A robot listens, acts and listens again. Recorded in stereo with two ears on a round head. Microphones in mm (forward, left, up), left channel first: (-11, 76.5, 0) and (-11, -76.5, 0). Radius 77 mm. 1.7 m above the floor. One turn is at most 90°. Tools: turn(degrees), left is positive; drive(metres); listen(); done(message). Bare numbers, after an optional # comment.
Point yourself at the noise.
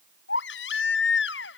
turn(90)
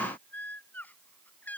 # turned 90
# So it is at 10° left.
turn(10)
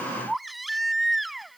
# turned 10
done("Facing the baby crying.")